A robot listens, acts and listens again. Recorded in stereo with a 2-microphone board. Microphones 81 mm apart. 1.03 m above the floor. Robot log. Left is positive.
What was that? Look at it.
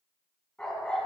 cmd yaw +30
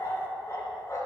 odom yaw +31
note: So it is at 140° left.
cmd yaw +140
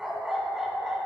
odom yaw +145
end: Facing the dog barking, 2 to 4 m away.